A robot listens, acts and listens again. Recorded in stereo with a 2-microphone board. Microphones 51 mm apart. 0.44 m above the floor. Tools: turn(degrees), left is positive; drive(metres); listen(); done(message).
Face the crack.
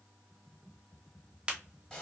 turn(degrees=-25)
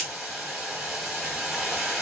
listen()
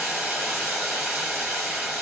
done("I heard a crack, but can't make it out now. It was about straight ahead or 130° right.")